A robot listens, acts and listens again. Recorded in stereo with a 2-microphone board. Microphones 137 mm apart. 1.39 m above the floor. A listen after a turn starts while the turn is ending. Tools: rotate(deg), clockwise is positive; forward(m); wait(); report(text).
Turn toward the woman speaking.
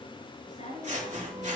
rotate(-65)
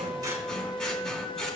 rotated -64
wait()
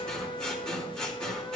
wait()
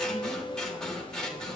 report("I heard a woman speaking, but can't make it out now. It was about 5° left or 50° left.")